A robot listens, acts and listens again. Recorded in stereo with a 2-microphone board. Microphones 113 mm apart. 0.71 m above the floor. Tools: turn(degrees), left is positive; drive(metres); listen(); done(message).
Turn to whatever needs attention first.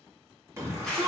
turn(degrees=-25)
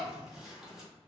listen()
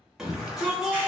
done("Facing the shout, under 1 m away.")